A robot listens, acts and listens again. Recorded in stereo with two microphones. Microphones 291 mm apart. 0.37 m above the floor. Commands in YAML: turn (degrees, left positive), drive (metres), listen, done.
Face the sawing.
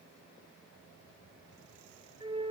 listen: true
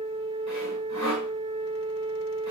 turn: -65
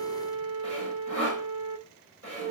turn: -50
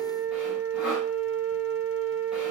listen: true
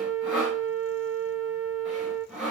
done: "Found it: sawing, straight ahead, over 4 m away."